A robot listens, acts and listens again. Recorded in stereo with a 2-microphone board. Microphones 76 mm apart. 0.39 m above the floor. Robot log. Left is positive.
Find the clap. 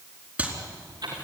cmd yaw -30
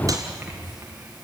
cmd idle
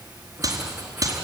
note: So it is at 130° right.
cmd yaw -130
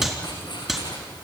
end: Facing the clap.